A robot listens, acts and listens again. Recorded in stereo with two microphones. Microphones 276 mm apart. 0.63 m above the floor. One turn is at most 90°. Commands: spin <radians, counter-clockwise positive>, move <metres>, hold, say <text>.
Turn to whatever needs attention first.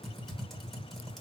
hold
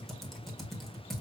hold
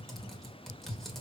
say I can't make out anything urgent to turn to.